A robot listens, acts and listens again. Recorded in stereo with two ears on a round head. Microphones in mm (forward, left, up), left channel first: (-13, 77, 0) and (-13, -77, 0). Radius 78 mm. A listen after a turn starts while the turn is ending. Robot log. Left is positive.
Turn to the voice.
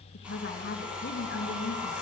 note: The woman speaking: about 60° left or 120° left.
cmd yaw +60
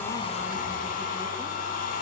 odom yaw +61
cmd idle
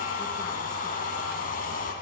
cmd idle
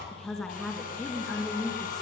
end: Facing the woman speaking, over 4 m away.